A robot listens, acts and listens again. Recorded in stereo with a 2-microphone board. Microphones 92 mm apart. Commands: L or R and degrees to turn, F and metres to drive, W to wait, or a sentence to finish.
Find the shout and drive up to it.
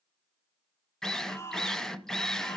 L30
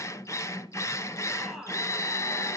F1.0
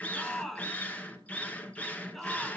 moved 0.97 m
F1.0
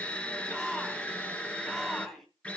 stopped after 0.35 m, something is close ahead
Something is in my way. I am facing the shout but have not reached it.